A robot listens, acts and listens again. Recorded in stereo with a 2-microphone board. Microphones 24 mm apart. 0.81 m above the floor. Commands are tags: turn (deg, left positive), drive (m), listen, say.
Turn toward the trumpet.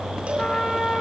<turn deg="50"/>
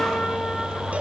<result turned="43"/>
<listen/>
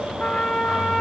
<turn deg="85"/>
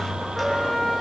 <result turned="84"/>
<say>Facing the trumpet, 2 to 4 m away.</say>